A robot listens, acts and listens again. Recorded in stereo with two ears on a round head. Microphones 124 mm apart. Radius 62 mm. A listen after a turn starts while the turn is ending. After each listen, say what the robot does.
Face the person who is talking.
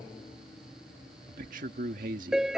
Turn 65° right.
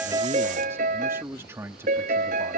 Turn 20° right.
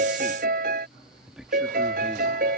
Found it: a man speaking, straight ahead.